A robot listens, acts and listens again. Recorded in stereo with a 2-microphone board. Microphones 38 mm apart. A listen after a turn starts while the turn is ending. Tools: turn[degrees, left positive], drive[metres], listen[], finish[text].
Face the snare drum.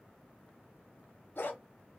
Action: listen[]
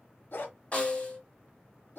Thought: The snare drum: about 40° left or 140° left.
Action: turn[40]
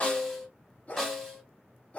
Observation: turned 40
Action: finish[Facing the snare drum, 1 to 2 m away.]